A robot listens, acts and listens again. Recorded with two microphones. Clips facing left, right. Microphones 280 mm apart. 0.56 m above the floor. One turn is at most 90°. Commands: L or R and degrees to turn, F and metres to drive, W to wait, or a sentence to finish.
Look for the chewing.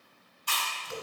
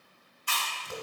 L45
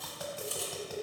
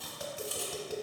W
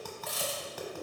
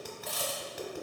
Found it: chewing, straight ahead, under 1 m away.